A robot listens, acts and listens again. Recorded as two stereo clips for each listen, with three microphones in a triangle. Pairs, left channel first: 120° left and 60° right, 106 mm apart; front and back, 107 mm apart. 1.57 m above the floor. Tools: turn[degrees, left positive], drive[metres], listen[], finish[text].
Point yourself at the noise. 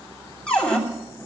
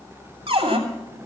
Thought: The cupboard door: 160° right.
Action: turn[-160]
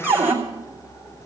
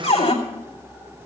Thought: The cupboard door is now 10° left.
Action: turn[10]
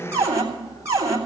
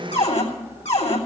Action: finish[Found it: a cupboard door, straight ahead, 2 to 4 m away.]